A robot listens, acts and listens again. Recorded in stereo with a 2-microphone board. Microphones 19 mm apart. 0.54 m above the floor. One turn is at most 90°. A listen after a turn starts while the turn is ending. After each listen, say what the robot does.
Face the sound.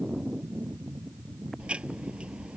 Turn 90° right.
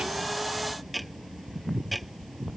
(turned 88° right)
Found it: ticking, straight ahead.